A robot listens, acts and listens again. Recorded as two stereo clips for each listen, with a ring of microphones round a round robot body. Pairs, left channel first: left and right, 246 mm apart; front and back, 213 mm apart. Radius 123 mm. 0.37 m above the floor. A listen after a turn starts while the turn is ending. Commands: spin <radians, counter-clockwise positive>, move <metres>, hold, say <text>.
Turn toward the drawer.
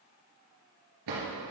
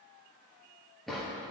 spin -1.57
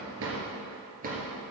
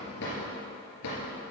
spin -0.52
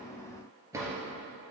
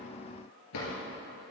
spin -0.17
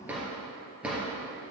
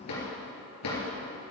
say Facing the drawer, 2 to 4 m away.